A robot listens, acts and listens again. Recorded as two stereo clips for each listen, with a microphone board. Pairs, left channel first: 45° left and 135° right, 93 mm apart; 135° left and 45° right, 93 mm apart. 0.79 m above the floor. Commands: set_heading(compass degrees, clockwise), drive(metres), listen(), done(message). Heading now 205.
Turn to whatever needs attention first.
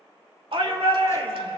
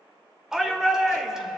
set_heading(335)
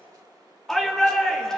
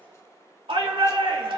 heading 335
set_heading(15)
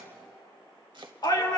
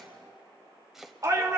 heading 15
done("Found it: a shout, straight ahead.")